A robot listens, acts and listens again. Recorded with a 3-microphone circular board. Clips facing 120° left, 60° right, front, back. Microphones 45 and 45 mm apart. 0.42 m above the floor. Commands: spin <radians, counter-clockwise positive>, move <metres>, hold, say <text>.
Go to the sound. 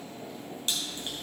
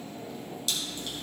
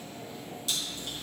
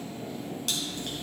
spin 2.97
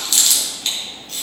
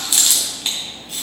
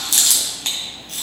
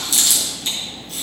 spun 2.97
spin 0.26
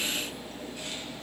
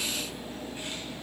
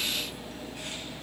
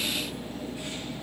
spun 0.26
hold
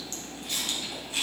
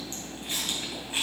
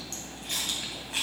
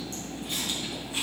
move 1.0
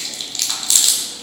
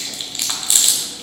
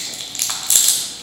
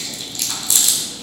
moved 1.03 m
move 1.0
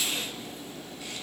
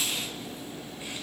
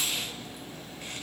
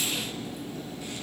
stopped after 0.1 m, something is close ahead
hold
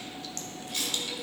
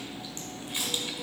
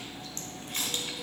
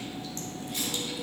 hold
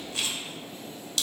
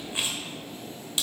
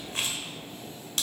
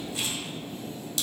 say I am next to the chewing.